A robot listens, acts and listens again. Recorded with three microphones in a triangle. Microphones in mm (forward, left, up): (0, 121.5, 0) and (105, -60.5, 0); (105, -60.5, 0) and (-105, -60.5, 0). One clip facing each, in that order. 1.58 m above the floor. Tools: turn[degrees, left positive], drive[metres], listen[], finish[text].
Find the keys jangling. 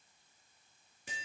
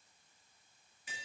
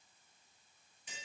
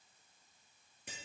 Action: listen[]
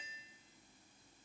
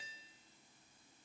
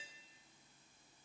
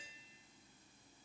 Action: listen[]
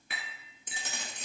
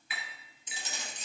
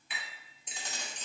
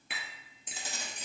Thought: The keys jangling: 105° left.
Action: turn[105]
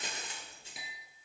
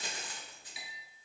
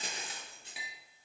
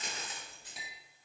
Thought: The keys jangling is now 60° left.
Action: turn[60]
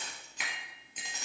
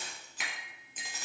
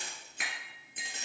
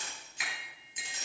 Thought: The keys jangling is now 25° left.
Action: turn[25]
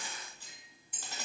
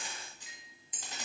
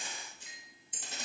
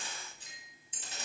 Thought: The keys jangling is now 15° left.
Action: turn[15]
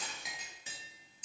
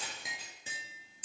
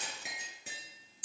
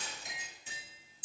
Action: finish[Found it: keys jangling, straight ahead.]